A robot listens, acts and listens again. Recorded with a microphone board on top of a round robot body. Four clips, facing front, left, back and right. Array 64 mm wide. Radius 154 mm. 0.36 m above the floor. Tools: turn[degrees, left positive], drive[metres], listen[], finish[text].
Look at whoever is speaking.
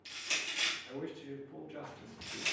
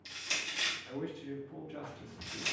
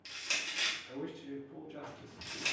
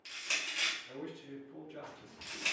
Thought: The man speaking: 80° left.
Action: turn[80]
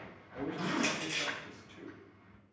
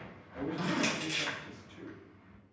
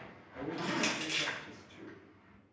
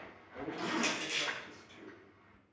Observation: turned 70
Thought: The man speaking is now 10° left.
Action: turn[10]
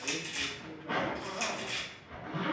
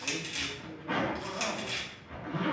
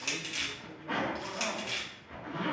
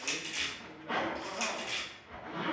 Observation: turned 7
Action: listen[]
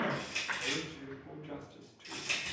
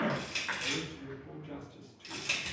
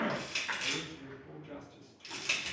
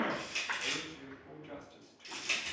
Action: finish[Found it: a man speaking, straight ahead, 1 to 2 m away.]